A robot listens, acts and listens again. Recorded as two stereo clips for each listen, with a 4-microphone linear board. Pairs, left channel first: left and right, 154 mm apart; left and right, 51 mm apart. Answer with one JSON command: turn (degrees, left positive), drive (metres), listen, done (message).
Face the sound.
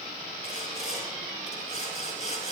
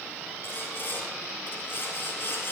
{"turn": 50}
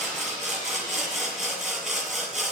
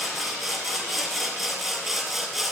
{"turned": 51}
{"done": "Found it: sawing, straight ahead."}